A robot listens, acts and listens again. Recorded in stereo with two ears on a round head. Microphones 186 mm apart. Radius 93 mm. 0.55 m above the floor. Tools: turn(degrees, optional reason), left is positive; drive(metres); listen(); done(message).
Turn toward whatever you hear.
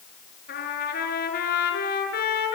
turn(degrees=50, reason="The trumpet: about 50° left or 130° left.")
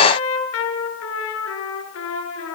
turn(degrees=75, reason="So it is at 75° left.")
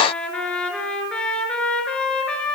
done("Facing the trumpet.")